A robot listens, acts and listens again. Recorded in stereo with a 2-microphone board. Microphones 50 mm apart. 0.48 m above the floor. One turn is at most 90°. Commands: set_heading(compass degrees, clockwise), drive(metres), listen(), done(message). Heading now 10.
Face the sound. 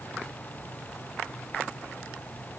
listen()
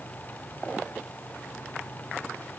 listen()
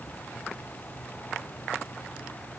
done("I can't make out anything.")